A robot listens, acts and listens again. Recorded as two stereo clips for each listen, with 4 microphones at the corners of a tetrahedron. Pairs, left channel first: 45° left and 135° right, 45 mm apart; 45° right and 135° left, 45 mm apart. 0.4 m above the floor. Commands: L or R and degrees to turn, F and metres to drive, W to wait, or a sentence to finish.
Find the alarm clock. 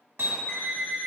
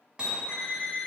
Found it: an alarm clock, straight ahead, 1 to 2 m away.